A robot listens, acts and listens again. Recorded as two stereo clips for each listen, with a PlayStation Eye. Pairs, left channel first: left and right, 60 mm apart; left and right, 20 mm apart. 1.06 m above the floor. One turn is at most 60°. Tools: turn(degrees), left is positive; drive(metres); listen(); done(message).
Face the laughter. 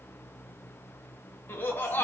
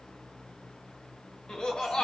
turn(degrees=40)
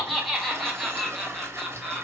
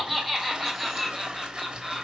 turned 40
done("Facing the laughter, 1 to 2 m away.")